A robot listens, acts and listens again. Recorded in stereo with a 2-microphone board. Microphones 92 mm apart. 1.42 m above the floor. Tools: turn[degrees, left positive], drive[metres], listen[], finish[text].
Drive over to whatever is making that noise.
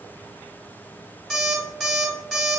Action: turn[30]
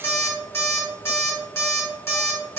Thought: So it is at 145° left.
Action: turn[145]
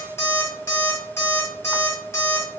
Thought: The alarm clock is now 30° left.
Action: turn[30]
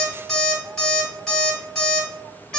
Action: drive[1.0]
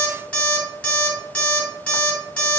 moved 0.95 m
Thought: The alarm clock is now 15° left.
Action: turn[15]
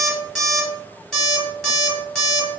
Action: drive[1.0]
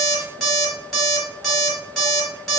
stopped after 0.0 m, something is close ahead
Action: finish[Arrived at the alarm clock, straight ahead.]